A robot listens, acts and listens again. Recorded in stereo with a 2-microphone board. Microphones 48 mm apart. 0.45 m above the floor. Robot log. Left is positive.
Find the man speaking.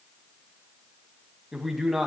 cmd yaw +30
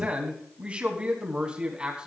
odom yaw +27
note: So it is at 20° right.
cmd yaw -20
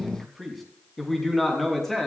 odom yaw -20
end: Facing the man speaking, over 4 m away.